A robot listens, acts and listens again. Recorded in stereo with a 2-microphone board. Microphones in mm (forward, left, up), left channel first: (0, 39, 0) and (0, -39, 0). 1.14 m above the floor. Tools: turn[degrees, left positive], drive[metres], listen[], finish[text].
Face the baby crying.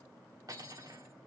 Action: listen[]
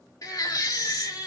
Thought: The baby crying: about 50° left or 130° left.
Action: turn[50]
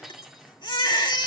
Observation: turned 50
Thought: So it is at 80° left.
Action: turn[80]
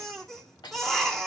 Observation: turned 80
Action: finish[Found it: a baby crying, straight ahead, 2 to 4 m away.]